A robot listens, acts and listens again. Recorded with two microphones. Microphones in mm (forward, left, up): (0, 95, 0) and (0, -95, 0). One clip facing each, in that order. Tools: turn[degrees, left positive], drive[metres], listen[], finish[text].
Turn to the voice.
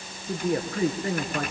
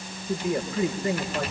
Thought: The man speaking: about 70° left or 110° left.
Action: turn[70]
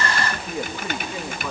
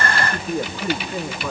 Action: finish[Found it: a man speaking, straight ahead, over 4 m away.]